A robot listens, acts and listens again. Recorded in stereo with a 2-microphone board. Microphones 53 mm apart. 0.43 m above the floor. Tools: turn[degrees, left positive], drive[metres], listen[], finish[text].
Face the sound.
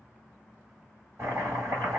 Thought: The chopping: about 65° right or 115° right.
Action: turn[-65]
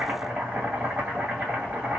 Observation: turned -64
Thought: So it is at 30° right.
Action: turn[-30]
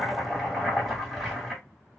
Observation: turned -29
Action: finish[Facing the chopping, 2 to 4 m away.]